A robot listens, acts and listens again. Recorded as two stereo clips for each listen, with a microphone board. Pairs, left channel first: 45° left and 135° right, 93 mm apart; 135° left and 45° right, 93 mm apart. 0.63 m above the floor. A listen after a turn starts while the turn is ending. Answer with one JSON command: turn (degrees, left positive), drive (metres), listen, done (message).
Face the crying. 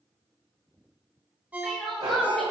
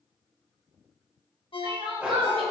{"turn": -40}
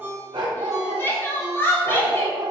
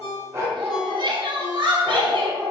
{"turn": -20}
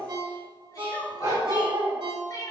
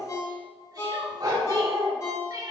{"done": "Facing the crying."}